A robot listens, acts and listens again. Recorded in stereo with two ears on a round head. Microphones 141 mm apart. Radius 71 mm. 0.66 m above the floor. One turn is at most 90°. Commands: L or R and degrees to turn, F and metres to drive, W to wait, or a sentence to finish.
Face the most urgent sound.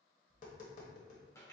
W
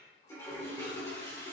W
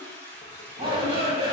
R35
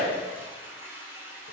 Facing the shout, 1 to 2 m away.